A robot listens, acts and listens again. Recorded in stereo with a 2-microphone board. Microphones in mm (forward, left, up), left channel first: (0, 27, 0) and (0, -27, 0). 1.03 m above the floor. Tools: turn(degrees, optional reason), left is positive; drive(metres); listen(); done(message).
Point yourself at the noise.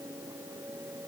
listen()
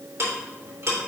turn(degrees=-55, reason="The ticking: about 55° right or 125° right.")
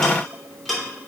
done("Found it: ticking, straight ahead, 2 to 4 m away.")